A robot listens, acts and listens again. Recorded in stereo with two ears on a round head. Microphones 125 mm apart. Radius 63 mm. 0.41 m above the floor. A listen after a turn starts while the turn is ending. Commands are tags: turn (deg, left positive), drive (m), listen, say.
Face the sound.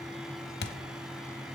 <turn deg="90"/>
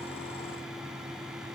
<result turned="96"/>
<say>Facing where the thud came from. I can't hear it now.</say>